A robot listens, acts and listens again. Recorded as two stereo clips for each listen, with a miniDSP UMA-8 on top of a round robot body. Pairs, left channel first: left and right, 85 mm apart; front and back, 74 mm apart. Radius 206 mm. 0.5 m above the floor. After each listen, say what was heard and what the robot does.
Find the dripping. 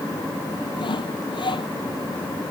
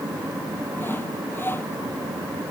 Keep listening.
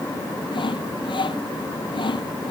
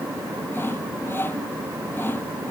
Keep listening.
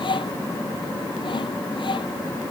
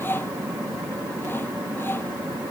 I can't make out dripping, only sawing.